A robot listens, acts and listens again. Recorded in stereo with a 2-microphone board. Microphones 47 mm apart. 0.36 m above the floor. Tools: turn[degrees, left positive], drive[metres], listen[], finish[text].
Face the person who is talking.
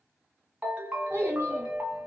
Thought: The child speaking: about 60° right or 120° right.
Action: turn[-60]
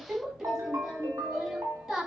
Thought: So it is at 20° right.
Action: turn[-20]
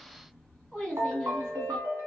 Action: finish[Facing the child speaking.]